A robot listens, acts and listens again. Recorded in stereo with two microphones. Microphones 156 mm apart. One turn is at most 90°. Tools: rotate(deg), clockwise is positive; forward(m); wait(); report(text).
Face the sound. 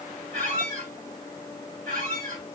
rotate(60)
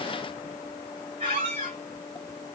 rotate(45)
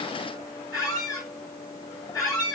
rotate(-25)
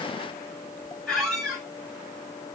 report("Facing the squeak, 2 to 4 m away.")